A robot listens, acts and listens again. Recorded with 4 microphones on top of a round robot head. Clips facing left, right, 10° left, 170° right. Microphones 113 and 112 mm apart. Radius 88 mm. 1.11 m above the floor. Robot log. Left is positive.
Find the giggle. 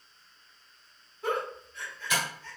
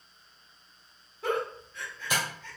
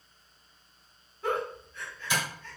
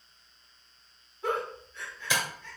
note: The giggle: 95° right.
cmd yaw -95
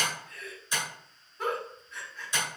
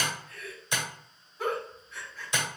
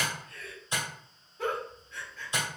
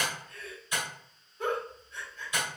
end: Found it: a giggle, straight ahead, 2 to 4 m away.